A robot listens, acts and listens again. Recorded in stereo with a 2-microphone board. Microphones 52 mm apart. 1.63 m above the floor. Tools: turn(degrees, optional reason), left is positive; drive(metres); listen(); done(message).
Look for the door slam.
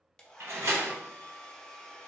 turn(degrees=-65, reason="The door slam: about 65° right or 115° right.")
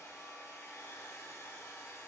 listen()
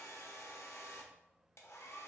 done("I heard a door slam, but can't make it out now. It was about straight ahead or 50° right.")